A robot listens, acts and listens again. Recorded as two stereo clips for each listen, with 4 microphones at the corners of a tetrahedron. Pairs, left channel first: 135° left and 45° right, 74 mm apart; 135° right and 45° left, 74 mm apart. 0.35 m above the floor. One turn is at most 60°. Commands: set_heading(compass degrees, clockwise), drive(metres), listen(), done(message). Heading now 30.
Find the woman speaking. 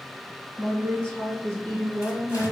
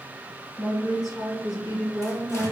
set_heading(90)
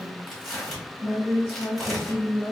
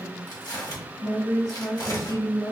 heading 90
set_heading(150)
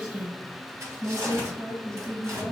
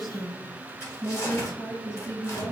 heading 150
set_heading(210)
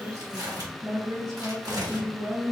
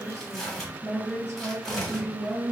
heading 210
set_heading(260)
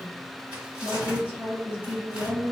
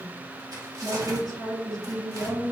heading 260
set_heading(235)
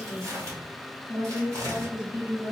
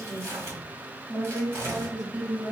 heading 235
done("Found it: a woman speaking, straight ahead, over 4 m away.")